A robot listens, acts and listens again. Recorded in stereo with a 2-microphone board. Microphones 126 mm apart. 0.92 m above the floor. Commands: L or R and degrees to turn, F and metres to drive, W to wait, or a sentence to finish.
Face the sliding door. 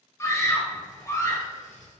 L90
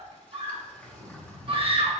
L10
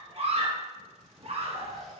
Facing the sliding door, 1 to 2 m away.